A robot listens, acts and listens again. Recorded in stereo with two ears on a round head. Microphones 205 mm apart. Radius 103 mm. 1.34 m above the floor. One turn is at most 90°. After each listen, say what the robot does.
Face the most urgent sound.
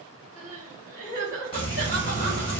Turn 35° left.
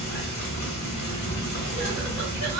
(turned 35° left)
Keep listening.
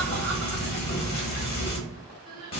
Found it: crying, straight ahead.